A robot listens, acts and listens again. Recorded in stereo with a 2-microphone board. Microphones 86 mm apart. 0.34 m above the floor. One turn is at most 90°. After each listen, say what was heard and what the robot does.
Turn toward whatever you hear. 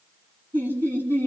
The laughter: about 25° right or 155° right. Turn 25° right.
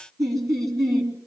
So it is at 130° right. Turn 90° right.
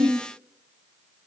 The laughter is now 60° right. Turn 60° right.
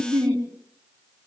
The laughter is now 35° right. Turn 35° right.
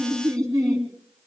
The laughter is now 10° left. Turn 10° left.
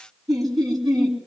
Facing the laughter, 2 to 4 m away.